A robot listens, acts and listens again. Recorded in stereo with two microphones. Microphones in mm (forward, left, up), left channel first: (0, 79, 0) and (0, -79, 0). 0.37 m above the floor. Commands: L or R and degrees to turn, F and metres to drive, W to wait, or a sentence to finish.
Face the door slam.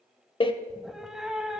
L35
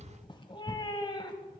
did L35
W
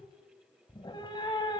I heard a door slam, but can't make it out now. It was about straight ahead or 110° left.